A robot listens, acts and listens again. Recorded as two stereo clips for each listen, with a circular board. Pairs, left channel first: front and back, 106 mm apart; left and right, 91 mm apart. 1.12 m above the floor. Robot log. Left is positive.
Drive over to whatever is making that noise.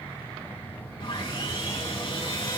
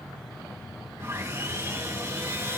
note: The sawing: 35° right.
cmd yaw -35
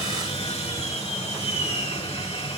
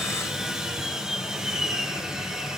cmd fwd 1.0
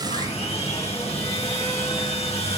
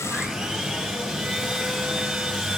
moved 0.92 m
cmd fwd 1.0
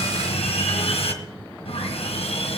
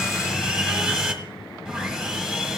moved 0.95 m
note: The sawing is now 10° right.
cmd yaw -10
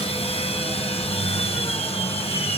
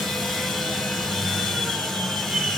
cmd fwd 1.0
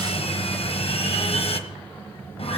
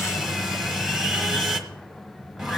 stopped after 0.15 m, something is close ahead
end: I am next to the sawing.